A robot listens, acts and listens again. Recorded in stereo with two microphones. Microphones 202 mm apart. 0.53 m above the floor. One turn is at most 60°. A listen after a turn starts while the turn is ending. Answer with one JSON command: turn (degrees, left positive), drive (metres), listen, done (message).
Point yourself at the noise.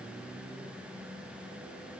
{"listen": true}
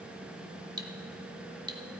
{"turn": -20}
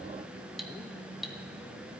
{"done": "Facing the cutlery clinking."}